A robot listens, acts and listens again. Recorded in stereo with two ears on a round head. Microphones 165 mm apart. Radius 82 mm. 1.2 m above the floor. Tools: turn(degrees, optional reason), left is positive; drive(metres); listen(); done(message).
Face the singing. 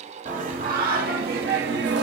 turn(degrees=-65, reason="The singing: about 65° right or 115° right.")
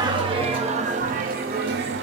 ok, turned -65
turn(degrees=-60, reason="So it is at 60° right.")
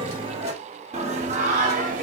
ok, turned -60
turn(degrees=-45, reason="The singing is now 45° right.")
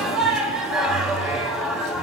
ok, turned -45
done("Found it: singing, straight ahead.")